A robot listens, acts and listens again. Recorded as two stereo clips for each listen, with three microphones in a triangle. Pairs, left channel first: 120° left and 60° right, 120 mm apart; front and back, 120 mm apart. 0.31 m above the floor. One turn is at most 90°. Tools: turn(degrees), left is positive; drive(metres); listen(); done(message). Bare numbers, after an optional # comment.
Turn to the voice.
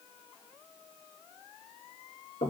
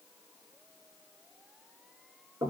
listen()
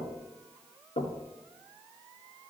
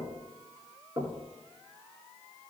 listen()
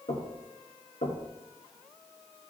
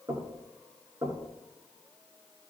done("I can't make out anyone speaking to turn to.")